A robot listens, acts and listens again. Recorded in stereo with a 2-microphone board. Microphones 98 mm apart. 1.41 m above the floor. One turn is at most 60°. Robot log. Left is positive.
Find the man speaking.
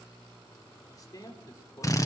note: The man speaking: about 35° left or 145° left.
cmd yaw +35
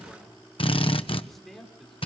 end: Found it: a man speaking, straight ahead, over 4 m away.